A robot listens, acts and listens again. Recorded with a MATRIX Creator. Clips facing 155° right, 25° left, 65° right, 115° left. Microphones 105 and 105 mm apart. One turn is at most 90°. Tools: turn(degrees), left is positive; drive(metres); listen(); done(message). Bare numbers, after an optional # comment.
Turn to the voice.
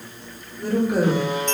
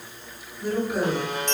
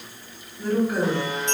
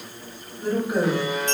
# The woman speaking: straight behind.
turn(90)
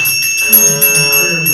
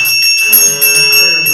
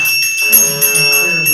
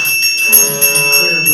# Nothing new. It was at 90° left.
turn(90)
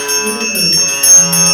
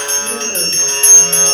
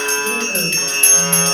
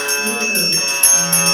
listen()
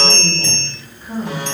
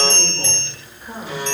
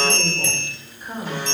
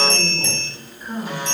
# The woman speaking is now 15° left.
turn(15)
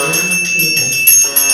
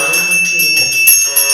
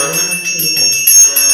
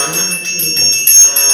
listen()
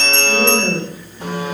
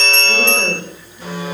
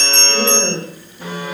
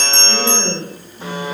done("Found it: a woman speaking, straight ahead, 1 to 2 m away.")